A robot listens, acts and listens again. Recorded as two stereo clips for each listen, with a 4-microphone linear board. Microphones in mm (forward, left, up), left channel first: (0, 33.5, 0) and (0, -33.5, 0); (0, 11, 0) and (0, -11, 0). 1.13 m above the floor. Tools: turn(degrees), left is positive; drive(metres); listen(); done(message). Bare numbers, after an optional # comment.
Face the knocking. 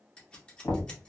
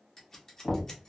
# The knocking: about 35° left or 145° left.
turn(35)
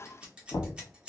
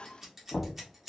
# So it is at 105° left.
turn(105)
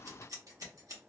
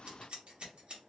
listen()
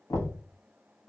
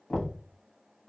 # The knocking is now 55° left.
turn(55)
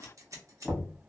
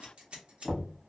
done("Found it: knocking, straight ahead, 1 to 2 m away.")